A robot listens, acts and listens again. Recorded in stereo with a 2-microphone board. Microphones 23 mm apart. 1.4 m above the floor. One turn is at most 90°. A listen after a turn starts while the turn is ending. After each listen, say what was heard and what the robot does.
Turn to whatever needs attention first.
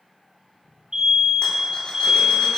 The fire alarm: about 50° right or 130° right. Turn 50° right.
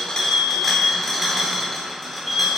Facing the fire alarm, over 4 m away.